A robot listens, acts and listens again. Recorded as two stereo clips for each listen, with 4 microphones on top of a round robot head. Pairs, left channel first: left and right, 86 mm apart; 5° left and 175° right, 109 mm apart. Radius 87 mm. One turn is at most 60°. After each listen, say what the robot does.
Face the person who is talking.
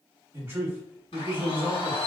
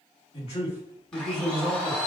Turn 30° right.
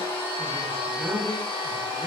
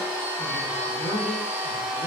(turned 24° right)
Turn 10° right.
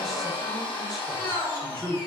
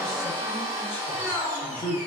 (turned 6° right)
Found it: a man speaking, straight ahead.